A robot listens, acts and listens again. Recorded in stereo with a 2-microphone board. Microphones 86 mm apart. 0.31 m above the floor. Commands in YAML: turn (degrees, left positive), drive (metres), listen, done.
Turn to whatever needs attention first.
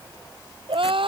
turn: -90
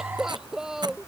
done: "Facing the crying."